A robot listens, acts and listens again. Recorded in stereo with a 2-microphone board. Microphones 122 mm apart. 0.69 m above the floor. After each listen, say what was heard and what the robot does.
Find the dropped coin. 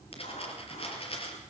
The dropped coin: about 50° left or 130° left. Turn 50° left.
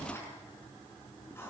Keep listening.
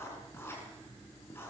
I heard a dropped coin, but can't make it out now. It was about straight ahead or 80° left.